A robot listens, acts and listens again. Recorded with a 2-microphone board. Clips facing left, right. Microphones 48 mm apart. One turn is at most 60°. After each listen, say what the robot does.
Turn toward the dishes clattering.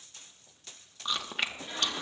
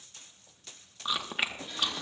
Keep listening.
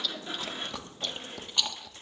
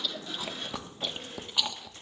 Keep listening.
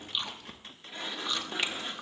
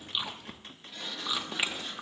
I can't make out dishes clattering to turn to.